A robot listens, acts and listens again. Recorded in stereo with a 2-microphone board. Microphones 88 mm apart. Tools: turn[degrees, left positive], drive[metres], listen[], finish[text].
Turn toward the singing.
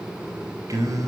Thought: The singing: about 45° right or 135° right.
Action: turn[-45]
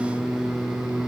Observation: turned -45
Action: finish[Facing the singing, over 4 m away.]